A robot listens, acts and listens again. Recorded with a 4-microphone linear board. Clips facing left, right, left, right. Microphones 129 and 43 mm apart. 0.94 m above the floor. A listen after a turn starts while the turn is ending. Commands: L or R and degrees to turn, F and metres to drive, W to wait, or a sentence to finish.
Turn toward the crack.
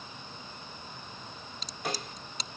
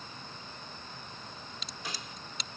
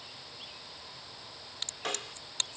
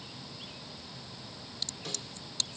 L45
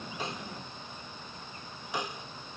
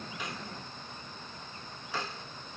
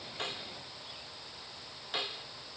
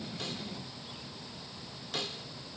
W
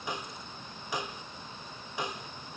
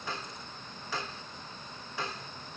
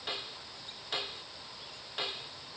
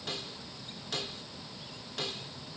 I heard a crack, but can't make it out now. It was about straight ahead or 90° left.